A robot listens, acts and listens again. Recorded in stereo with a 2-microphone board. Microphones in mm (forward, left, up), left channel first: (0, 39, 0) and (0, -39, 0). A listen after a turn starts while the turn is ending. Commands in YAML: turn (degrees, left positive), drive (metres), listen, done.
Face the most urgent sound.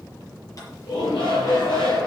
turn: 90
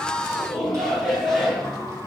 done: "Found it: a shout, straight ahead, over 4 m away."